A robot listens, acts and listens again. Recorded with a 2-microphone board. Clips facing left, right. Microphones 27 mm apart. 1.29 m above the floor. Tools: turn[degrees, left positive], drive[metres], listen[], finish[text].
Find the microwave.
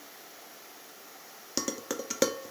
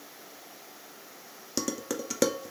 Action: listen[]
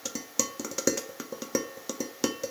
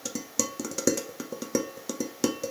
Action: listen[]
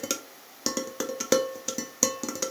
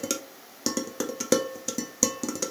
Action: finish[I can't make out a microwave to turn to.]